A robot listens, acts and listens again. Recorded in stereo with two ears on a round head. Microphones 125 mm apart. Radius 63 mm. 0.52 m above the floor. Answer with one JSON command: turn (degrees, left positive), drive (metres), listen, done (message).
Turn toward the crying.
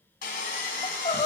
{"turn": 50}
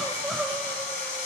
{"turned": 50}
{"done": "Facing the crying, under 1 m away."}